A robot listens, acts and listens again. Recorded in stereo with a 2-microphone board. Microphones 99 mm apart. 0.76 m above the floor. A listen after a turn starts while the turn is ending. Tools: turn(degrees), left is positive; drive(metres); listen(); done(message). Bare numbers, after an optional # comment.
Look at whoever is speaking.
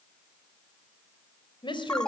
# The woman speaking: about 50° left or 130° left.
turn(50)
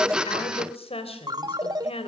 # So it is at 75° left.
turn(75)
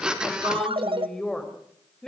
done("Found it: a woman speaking, straight ahead, 2 to 4 m away.")